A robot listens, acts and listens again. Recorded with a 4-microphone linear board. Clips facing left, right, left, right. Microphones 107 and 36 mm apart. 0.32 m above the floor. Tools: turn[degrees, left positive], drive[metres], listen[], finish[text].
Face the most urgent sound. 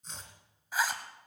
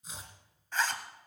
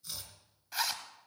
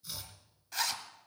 Action: listen[]
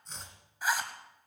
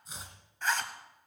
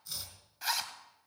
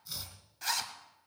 Action: listen[]
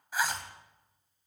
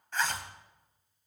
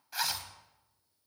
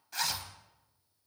Action: finish[I can't make out anything urgent to turn to.]